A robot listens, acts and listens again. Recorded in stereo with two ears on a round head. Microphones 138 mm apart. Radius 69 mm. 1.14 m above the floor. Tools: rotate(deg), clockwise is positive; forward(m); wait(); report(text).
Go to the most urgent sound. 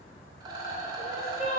rotate(-45)
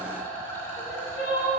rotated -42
rotate(-85)
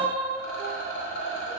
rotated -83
forward(1.0)
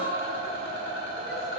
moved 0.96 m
wait()
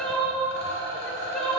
forward(1.0)
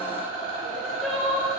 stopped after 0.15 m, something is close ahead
report("I am next to the crying.")